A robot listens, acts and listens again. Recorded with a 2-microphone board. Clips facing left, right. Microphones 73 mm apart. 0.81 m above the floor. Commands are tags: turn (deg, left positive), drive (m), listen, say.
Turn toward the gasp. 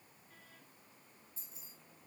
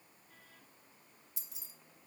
<listen/>
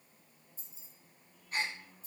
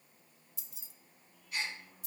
<turn deg="40"/>
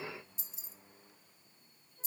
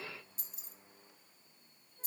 <listen/>
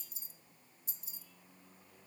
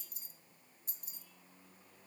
<say>I heard a gasp, but can't make it out now. It was about straight ahead or 100° left.</say>